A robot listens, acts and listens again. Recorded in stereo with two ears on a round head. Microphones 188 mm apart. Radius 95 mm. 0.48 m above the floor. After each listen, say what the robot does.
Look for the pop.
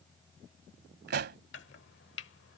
Turn 55° right.
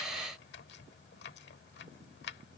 Keep listening.
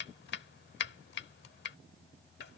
I heard a pop, but can't make it out now. It was about straight ahead or 70° right.